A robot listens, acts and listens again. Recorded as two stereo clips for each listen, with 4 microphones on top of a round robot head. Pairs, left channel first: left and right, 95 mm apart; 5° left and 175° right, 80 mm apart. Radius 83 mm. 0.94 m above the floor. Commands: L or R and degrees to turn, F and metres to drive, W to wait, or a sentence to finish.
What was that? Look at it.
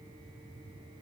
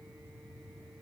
W
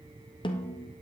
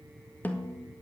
L70
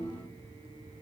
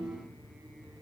W
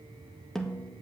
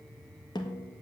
Found it: a snare drum, straight ahead.